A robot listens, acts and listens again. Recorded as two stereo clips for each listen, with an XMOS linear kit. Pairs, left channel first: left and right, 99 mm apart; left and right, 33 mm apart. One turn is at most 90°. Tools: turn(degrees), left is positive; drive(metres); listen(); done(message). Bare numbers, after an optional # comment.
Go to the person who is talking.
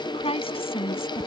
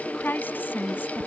# The woman speaking: about 75° left or 105° left.
turn(75)
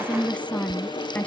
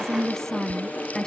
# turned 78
# So it is at 15° left.
turn(15)
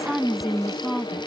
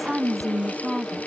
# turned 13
drive(1.0)
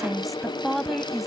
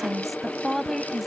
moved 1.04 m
drive(1.0)
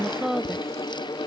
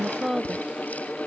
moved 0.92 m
drive(1.0)
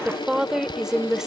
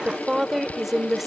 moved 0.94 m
drive(1.0)
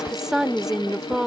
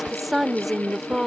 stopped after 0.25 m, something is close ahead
done("Arrived at the woman speaking, straight ahead.")